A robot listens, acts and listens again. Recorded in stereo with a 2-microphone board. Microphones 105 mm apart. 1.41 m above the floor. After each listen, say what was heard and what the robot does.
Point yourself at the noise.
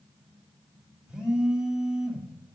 Turn 30° right.
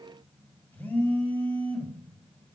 So it is at 20° left. Turn 20° left.
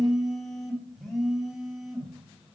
Found it: a phone buzzing, straight ahead.